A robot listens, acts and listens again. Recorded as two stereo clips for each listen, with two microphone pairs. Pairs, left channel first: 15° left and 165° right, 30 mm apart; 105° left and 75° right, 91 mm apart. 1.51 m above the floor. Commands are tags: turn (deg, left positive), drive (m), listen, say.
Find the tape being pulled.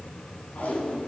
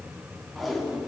<turn deg="15"/>
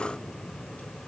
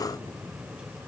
<listen/>
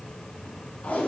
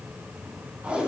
<say>Facing the tape being pulled.</say>